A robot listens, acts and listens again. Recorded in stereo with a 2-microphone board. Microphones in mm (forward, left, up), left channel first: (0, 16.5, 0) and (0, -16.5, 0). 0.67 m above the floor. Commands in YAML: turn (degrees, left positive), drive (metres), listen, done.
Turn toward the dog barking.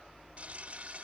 listen: true
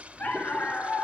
turn: 90
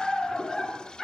done: "Found it: a dog barking, straight ahead, 2 to 4 m away."